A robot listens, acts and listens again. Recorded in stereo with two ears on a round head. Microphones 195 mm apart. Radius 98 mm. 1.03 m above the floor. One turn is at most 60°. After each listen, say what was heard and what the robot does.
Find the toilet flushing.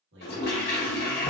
The toilet flushing: about 45° left or 135° left. Turn 45° left.
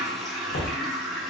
Facing the toilet flushing, 1 to 2 m away.